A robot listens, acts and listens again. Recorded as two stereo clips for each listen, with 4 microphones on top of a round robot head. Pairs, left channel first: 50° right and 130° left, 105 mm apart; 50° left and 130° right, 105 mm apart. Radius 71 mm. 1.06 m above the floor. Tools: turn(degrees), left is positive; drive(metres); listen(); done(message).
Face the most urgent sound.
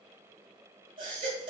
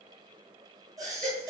turn(degrees=175)
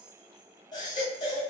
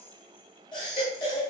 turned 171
done("Found it: a baby crying, straight ahead, 2 to 4 m away.")